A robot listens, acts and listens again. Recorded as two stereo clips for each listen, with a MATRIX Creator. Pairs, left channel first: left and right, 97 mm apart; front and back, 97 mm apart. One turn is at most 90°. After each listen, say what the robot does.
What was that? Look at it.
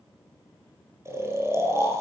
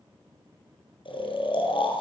Turn 30° right.
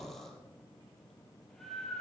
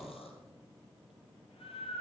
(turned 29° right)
Found it: snoring, straight ahead.